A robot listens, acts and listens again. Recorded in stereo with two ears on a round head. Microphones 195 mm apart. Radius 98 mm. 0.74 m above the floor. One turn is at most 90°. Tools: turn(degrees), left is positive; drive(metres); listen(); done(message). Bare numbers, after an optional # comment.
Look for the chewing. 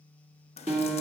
listen()
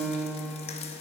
listen()
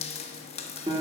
done("I can't make out chewing to turn to.")